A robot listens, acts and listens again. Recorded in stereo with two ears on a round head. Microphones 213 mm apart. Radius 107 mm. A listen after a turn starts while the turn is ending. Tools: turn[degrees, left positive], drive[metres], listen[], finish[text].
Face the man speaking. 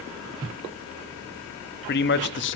Thought: The man speaking: about 50° left or 130° left.
Action: turn[50]
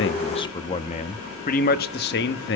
Thought: So it is at 50° left.
Action: turn[50]
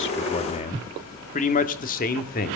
Thought: The man speaking is now 35° left.
Action: turn[35]
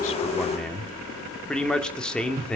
Action: finish[Facing the man speaking, 2 to 4 m away.]